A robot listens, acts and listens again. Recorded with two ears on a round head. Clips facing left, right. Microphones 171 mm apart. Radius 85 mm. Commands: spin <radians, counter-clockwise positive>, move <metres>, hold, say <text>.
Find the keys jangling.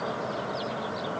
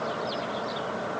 hold
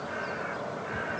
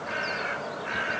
hold
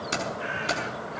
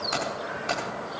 spin 0.70
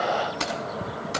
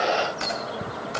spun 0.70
spin 1.75
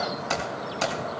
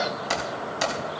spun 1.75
spin -0.26
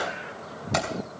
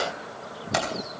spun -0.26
say Facing the keys jangling.